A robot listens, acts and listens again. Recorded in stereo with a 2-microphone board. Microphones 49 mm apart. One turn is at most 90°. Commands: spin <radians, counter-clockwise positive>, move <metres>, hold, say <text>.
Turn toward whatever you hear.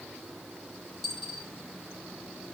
spin 0.52
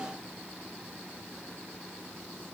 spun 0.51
hold
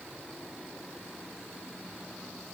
say I heard a dropped coin, but can't make it out now. It was about 20° right or 145° left.